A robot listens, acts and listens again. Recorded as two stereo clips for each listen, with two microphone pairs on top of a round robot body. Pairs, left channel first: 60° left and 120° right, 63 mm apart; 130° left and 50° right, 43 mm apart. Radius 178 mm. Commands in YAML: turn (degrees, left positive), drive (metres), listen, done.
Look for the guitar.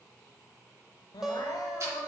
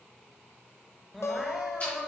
turn: 160
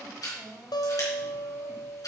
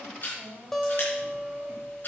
turn: 50
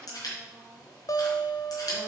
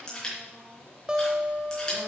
turn: 25
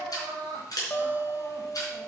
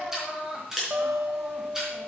done: "Found it: a guitar, straight ahead."